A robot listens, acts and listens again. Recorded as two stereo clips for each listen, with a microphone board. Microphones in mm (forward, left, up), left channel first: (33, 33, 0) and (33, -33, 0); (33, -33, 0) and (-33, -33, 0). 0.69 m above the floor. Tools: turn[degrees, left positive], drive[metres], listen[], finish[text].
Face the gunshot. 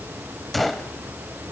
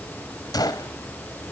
Action: finish[Facing the gunshot.]